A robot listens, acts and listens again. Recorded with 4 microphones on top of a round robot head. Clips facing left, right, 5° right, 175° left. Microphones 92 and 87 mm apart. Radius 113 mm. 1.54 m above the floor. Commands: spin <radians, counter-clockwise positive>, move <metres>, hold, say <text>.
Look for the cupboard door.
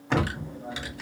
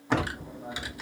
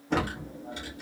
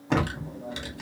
spin 1.31
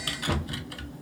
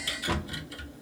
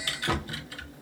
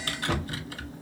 say Facing the cupboard door, 1 to 2 m away.